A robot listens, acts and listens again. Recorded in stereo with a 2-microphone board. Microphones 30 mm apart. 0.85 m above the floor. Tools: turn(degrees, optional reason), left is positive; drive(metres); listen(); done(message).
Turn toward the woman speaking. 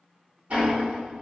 listen()
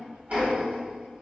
listen()
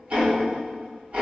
done("I can't make out a woman speaking, only ticking.")